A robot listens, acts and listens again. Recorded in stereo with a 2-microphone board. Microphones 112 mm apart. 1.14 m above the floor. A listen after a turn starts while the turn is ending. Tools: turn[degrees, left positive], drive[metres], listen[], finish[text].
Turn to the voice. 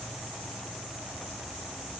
Action: listen[]
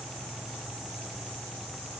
Action: listen[]
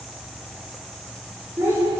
Thought: The child speaking: about 20° right or 160° right.
Action: turn[-20]
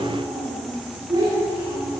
Thought: The child speaking: about 35° right or 145° right.
Action: turn[-35]
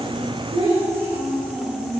Thought: So it is at 110° right.
Action: turn[-110]
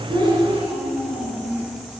Thought: The child speaking is now 10° right.
Action: turn[-10]
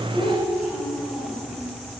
Action: finish[Found it: a child speaking, straight ahead.]